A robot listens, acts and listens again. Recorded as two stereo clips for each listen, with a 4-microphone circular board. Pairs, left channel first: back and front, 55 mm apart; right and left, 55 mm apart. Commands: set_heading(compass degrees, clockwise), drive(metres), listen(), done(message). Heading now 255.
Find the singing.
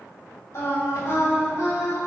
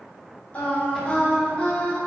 set_heading(55)
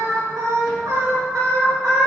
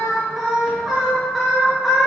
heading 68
done("Found it: singing, straight ahead, 2 to 4 m away.")